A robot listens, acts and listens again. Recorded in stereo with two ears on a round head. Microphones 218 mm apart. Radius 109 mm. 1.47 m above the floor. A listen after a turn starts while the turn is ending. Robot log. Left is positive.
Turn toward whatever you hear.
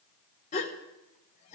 note: The gasp: about 30° left or 150° left.
cmd yaw +30
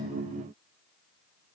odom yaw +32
cmd idle
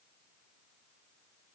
end: I heard a gasp, but can't make it out now. It was about 5° right or 120° left.